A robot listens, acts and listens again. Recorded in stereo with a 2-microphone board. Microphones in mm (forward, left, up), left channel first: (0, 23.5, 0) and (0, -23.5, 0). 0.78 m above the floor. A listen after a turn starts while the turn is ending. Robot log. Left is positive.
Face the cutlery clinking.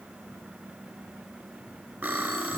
note: The cutlery clinking: about 40° right or 140° right.
cmd yaw -40
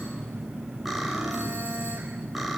cmd idle
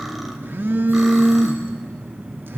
cmd idle
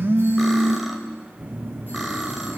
end: I heard cutlery clinking, but can't make it out now. It was about straight ahead or 100° right.